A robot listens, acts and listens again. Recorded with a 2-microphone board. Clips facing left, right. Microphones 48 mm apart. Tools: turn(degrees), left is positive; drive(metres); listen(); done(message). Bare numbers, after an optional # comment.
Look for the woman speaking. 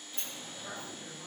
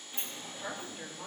# The woman speaking: about 55° right or 125° right.
turn(-55)
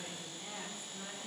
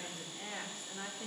# So it is at 65° right.
turn(-65)
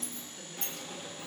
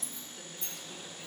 done("Found it: a woman speaking, straight ahead.")